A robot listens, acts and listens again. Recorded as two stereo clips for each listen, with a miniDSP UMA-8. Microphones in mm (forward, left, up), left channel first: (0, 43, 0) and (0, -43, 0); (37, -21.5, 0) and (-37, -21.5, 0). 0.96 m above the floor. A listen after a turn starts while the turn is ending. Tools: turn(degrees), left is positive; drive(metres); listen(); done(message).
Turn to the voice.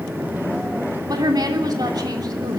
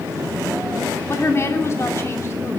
turn(degrees=-50)
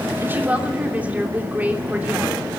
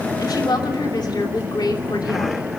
turn(degrees=-15)
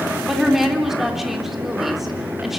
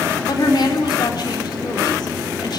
done("Facing the woman speaking, 2 to 4 m away.")